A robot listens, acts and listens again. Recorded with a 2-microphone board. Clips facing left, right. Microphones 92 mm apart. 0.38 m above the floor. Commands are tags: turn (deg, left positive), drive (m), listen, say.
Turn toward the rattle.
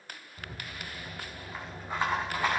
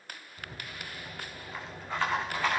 <turn deg="30"/>
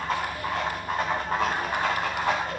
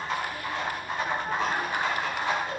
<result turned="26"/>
<turn deg="140"/>
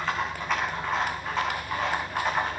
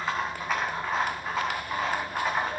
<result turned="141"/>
<say>Found it: a rattle, straight ahead, over 4 m away.</say>